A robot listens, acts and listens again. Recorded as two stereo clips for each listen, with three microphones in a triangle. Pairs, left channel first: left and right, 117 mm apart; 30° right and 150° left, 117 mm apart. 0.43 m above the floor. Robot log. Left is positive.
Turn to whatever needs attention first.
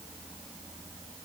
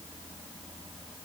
cmd idle
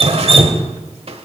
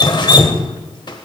cmd idle
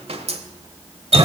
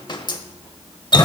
end: I can't make out anything urgent to turn to.